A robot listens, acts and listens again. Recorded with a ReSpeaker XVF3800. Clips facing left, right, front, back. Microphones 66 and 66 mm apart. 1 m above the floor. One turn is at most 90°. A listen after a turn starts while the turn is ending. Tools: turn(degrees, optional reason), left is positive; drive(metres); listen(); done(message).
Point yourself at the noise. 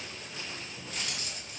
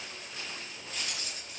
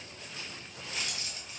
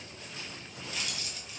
turn(degrees=55, reason="The keys jangling: 55° left.")
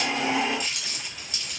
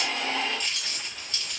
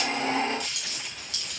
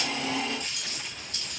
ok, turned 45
turn(degrees=10, reason="The keys jangling is now 10° left.")
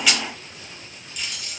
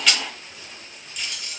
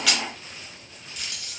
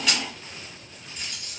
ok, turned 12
done("Found it: keys jangling, straight ahead, under 1 m away.")